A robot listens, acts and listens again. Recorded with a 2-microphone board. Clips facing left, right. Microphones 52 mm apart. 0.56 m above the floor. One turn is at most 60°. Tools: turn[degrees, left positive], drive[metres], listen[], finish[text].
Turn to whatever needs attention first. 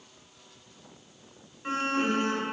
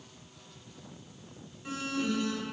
Thought: The alarm: about 45° left or 135° left.
Action: turn[45]
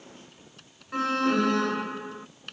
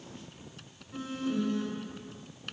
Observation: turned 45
Thought: So it is at 85° left.
Action: turn[60]
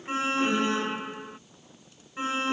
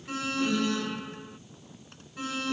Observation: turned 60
Thought: The alarm is now 30° left.
Action: turn[30]
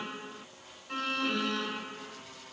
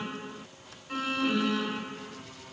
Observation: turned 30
Action: finish[Facing the alarm.]